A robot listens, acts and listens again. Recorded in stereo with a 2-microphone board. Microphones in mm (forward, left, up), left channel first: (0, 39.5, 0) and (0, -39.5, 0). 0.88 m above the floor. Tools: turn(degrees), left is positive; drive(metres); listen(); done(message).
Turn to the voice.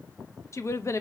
turn(degrees=40)
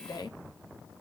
turn(degrees=95)
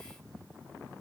listen()
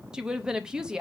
turn(degrees=-10)
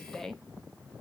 done("Facing the woman speaking.")